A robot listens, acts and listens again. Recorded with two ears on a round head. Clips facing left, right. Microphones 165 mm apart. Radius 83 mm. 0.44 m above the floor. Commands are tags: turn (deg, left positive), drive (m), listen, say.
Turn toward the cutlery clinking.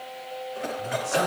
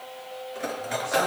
<turn deg="-35"/>
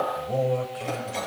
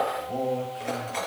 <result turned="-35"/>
<say>Facing the cutlery clinking, over 4 m away.</say>